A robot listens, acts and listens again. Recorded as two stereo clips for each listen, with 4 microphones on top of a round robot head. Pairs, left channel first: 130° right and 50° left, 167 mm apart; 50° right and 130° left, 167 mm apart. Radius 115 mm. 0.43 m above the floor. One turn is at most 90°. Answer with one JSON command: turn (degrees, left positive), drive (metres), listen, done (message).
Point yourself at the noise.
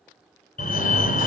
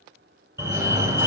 {"turn": -90}
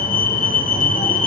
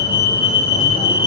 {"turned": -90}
{"turn": -90}
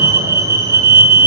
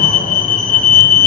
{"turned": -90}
{"turn": -15}
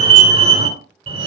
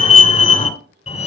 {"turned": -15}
{"done": "Facing the fire alarm."}